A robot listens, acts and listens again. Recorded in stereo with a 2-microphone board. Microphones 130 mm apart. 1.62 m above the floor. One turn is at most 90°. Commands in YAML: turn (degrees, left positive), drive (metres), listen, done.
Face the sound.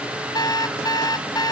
turn: 35
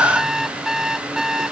done: "Found it: an alarm clock, straight ahead."